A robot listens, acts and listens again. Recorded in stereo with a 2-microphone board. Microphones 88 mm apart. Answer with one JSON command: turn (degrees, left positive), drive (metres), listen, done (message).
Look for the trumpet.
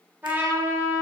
{"turn": -25}
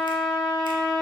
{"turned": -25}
{"done": "Found it: a trumpet, straight ahead, 1 to 2 m away."}